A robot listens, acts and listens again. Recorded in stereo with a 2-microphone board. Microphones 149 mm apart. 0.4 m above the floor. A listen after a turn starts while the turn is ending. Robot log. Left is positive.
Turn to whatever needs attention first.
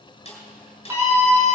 note: The scream: about 15° right or 165° right.
cmd yaw -15
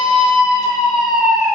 end: Facing the scream.